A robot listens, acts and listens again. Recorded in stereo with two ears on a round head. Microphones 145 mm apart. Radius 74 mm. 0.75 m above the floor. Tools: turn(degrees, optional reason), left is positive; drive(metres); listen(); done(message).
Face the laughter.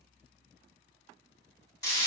listen()
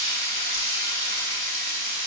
listen()
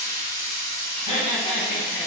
turn(degrees=50, reason="The laughter: about 50° left or 130° left.")
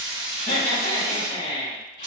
turn(degrees=80, reason="So it is at 80° left.")
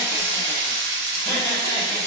turn(degrees=25, reason="The laughter is now 25° left.")
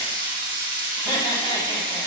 turn(degrees=-10, reason="The laughter is now 10° right.")
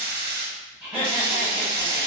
done("Facing the laughter.")